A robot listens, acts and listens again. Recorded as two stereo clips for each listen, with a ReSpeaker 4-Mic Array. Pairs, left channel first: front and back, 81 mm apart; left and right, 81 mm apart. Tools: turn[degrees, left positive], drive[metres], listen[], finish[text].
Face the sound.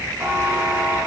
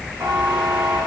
Thought: The buzzer: 125° right.
Action: turn[-125]
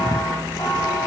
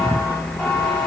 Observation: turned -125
Thought: The buzzer is now 10° left.
Action: turn[10]
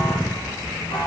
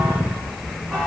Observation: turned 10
Action: finish[Found it: a buzzer, straight ahead, 2 to 4 m away.]